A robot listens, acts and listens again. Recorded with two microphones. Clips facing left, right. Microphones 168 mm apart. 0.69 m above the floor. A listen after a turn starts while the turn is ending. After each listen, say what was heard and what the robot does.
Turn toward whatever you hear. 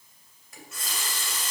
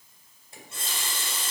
The running tap: about 30° right or 150° right. Turn 30° right.
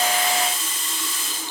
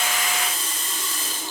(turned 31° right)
So it is at 120° right. Turn 120° right.
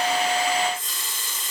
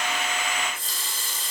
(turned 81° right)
The running tap is now 40° right. Turn 40° right.
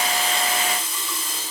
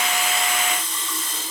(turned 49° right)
The running tap is now 10° left. Turn 10° left.
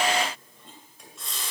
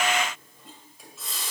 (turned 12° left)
Facing the running tap.